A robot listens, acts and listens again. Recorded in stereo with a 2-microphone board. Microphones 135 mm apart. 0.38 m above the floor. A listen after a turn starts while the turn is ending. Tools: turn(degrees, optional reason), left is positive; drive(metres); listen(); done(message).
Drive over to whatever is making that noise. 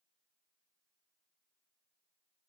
listen()
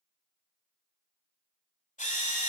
turn(degrees=65, reason="The drill: about 65° left or 115° left.")
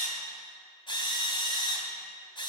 turn(degrees=40, reason="So it is at 40° left.")
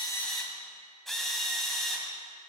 drive(metres=1.0)
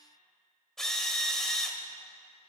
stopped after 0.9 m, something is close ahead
done("Arrived at the drill, straight ahead.")